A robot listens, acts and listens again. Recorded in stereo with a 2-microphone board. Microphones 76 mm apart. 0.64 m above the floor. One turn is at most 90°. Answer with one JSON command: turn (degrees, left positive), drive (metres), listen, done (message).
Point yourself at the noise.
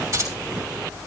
{"turn": -40}
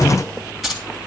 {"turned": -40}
{"done": "Facing the keys jangling, 2 to 4 m away."}